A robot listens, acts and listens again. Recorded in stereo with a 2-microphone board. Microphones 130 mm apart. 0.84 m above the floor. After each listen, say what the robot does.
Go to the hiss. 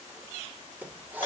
Turn 30° right.
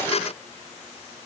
Keep listening.
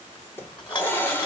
Turn 20° left.
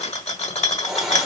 Drive 1.0 m forward.
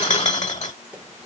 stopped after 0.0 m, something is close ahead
Keep listening.
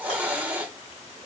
Turn 10° right.
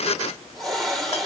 Something is in my way. I am facing the hiss but have not reached it.